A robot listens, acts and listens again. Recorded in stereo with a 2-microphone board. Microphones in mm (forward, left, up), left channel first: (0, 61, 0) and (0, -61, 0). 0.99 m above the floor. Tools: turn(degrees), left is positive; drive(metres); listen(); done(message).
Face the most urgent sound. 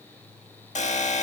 turn(degrees=90)
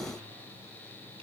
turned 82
turn(degrees=10)
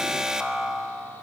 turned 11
done("Found it: an alarm, straight ahead.")